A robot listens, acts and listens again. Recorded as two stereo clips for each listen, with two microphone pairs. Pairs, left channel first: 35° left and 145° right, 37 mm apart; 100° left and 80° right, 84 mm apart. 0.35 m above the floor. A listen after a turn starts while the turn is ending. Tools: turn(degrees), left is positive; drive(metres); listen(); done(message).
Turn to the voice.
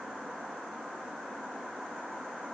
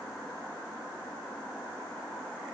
listen()
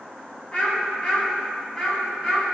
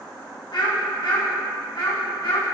turn(degrees=110)
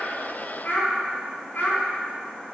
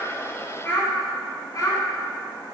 turn(degrees=45)
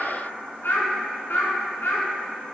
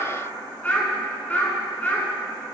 turn(degrees=25)
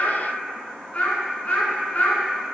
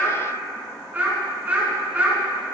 turn(degrees=-15)
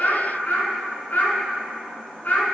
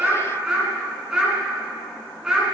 done("Found it: a child speaking, straight ahead, 2 to 4 m away.")